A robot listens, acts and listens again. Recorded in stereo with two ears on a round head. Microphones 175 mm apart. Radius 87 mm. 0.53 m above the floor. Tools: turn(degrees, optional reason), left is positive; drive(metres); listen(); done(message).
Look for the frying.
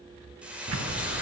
turn(degrees=-30)
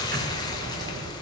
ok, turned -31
turn(degrees=25, reason="So it is at 25° left.")
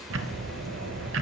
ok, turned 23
listen()
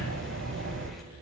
listen()
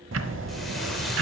done("Facing where the frying came from. I can't hear it now.")